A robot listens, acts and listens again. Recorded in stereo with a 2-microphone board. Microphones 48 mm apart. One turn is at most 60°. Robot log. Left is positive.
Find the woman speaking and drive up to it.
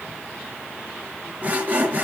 cmd idle
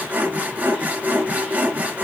cmd idle
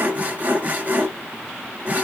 end: I can't make out a woman speaking, only sawing.